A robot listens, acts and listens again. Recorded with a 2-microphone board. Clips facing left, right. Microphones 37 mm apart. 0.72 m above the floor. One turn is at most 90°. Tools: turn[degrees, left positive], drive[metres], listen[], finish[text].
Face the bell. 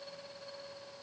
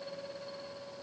Action: listen[]
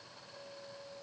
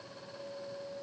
Action: listen[]
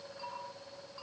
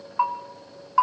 Action: turn[-90]
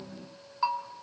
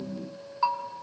Action: finish[Found it: a bell, straight ahead.]